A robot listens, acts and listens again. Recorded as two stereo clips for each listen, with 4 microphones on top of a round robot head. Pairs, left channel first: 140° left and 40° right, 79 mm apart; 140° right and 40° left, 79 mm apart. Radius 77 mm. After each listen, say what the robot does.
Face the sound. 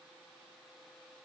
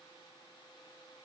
Keep listening.
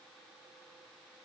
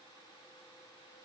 Keep listening.
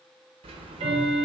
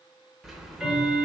Turn 45° right.
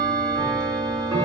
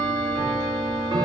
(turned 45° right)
Found it: ticking, straight ahead.